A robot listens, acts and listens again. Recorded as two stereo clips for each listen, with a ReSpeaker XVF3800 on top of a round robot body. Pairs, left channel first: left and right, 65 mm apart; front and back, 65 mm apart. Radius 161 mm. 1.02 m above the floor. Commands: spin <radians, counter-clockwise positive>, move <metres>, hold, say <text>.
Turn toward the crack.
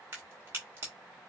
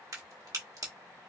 spin -2.53
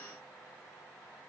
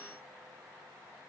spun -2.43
spin -0.17
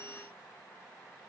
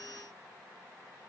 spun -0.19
say I heard a crack from this way, but can't make it out now.